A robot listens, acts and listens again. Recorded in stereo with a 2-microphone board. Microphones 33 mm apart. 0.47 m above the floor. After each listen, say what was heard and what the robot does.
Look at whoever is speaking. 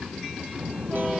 The child speaking: about 35° right or 145° right. Turn 35° right.
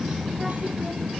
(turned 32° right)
Found it: a child speaking, straight ahead.